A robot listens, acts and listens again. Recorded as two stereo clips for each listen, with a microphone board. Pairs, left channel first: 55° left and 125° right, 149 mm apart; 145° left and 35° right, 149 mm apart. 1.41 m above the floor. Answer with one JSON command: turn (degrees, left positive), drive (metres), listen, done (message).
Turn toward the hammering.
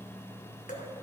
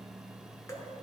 {"listen": true}
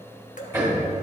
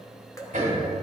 {"turn": -50}
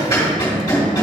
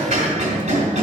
{"turn": -10}
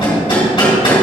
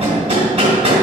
{"done": "Facing the hammering."}